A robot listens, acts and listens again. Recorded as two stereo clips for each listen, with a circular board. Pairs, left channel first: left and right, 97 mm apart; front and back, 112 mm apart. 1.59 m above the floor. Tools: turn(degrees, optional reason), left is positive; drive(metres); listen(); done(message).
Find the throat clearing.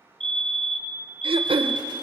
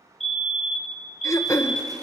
turn(degrees=-65, reason="The throat clearing: 65° right.")
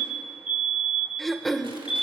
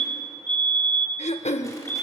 done("Found it: throat clearing, straight ahead, 1 to 2 m away.")